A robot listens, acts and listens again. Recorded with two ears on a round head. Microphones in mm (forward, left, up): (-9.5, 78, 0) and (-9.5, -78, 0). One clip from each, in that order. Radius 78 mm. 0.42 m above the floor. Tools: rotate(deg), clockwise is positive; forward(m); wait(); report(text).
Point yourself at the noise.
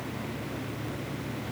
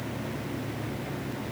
wait()
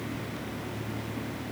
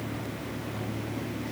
wait()
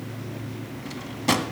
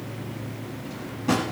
rotate(-75)
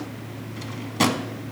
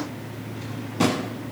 rotate(-35)
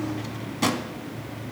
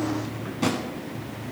rotate(-30)
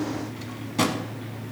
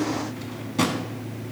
rotate(-10)
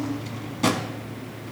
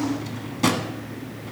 report("Found it: a drawer, straight ahead.")